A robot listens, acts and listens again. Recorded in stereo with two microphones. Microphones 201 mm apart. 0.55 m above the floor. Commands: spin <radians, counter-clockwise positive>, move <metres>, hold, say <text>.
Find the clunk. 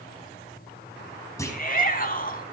spin 0.52
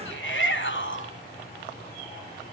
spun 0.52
hold
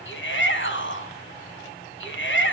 say I heard a clunk, but can't make it out now. It was about 15° right or 135° left.